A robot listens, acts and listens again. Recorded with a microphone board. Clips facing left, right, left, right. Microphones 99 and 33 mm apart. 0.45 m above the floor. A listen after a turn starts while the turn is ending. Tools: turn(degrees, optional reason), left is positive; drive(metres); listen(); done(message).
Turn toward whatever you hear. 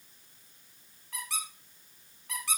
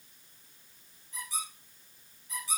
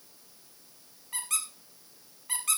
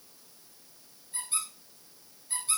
turn(degrees=90)
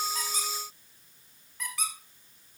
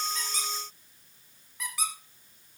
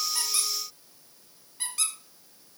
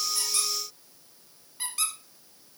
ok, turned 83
done("Facing the squeak.")